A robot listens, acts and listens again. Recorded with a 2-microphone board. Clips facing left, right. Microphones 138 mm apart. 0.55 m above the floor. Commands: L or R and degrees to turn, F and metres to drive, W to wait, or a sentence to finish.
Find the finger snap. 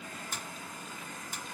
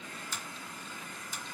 L65
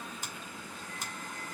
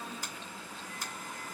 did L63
L30
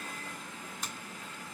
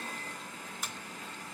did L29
Facing the finger snap, 2 to 4 m away.